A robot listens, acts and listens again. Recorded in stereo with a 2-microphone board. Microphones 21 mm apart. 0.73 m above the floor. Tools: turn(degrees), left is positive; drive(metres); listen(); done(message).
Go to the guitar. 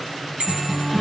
turn(degrees=-40)
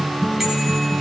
turn(degrees=-100)
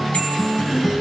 drive(metres=1.0)
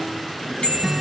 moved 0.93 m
drive(metres=1.0)
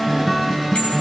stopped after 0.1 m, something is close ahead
done("Arrived at the guitar, straight ahead.")